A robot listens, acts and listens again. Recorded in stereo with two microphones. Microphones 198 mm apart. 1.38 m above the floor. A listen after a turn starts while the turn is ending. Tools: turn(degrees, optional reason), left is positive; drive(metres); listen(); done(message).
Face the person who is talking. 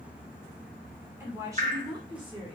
turn(degrees=-25, reason="The woman speaking: about 25° right or 155° right.")
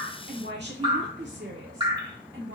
turn(degrees=-100, reason="So it is at 100° right.")
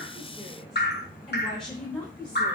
done("Found it: a woman speaking, straight ahead, 2 to 4 m away.")